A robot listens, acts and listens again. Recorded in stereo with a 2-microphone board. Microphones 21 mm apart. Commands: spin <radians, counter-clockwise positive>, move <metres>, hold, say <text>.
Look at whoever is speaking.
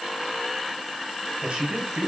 spin -1.05
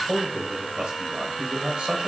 spin -0.96
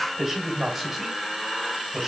spin -0.26
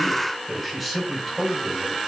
say Found it: a man speaking, straight ahead, 2 to 4 m away.